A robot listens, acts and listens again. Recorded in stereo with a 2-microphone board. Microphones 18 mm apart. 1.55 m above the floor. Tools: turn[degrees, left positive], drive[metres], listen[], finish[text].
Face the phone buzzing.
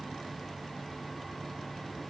Action: listen[]
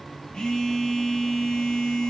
Thought: The phone buzzing: about 50° left or 130° left.
Action: turn[50]
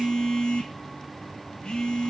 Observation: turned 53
Thought: So it is at 75° left.
Action: turn[75]
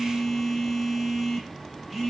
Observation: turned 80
Action: finish[Found it: a phone buzzing, straight ahead.]